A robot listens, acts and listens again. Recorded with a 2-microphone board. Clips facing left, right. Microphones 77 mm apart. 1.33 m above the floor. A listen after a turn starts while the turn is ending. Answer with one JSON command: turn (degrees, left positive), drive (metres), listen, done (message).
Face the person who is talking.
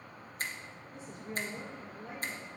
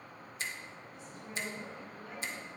{"turn": 30}
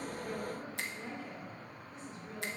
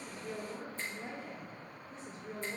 {"turn": -35}
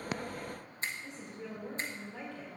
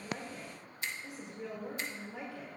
{"turn": -15}
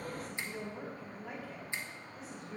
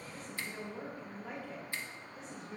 {"done": "Found it: a woman speaking, straight ahead, 2 to 4 m away."}